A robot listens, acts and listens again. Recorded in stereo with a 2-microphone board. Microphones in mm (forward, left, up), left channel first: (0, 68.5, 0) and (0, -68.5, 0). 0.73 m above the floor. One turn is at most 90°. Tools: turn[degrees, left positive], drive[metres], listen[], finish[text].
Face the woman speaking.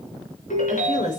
Thought: The woman speaking: about 65° left or 115° left.
Action: turn[65]
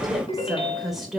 Action: finish[Facing the woman speaking, 2 to 4 m away.]